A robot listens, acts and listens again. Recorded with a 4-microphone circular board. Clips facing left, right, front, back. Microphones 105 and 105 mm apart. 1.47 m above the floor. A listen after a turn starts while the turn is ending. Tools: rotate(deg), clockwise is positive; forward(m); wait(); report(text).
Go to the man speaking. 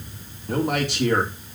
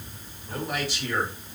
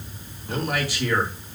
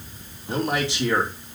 rotate(-115)
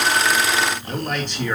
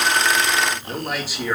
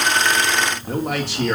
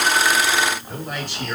forward(1.0)
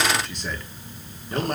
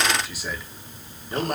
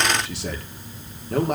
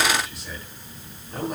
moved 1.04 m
forward(1.0)
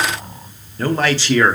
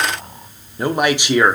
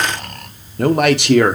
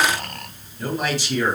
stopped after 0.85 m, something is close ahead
rotate(15)
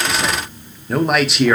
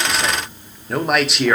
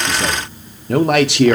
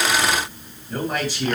report("I am next to the man speaking.")